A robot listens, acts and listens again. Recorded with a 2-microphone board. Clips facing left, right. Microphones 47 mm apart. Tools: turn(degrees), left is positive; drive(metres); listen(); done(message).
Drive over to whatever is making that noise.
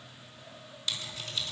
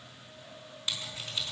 turn(degrees=-20)
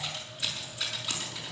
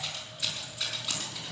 drive(metres=1.0)
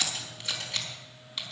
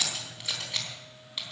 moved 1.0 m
drive(metres=1.0)
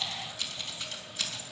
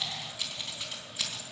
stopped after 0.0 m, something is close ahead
done("Something is in my way. I am facing the scissors but have not reached it.")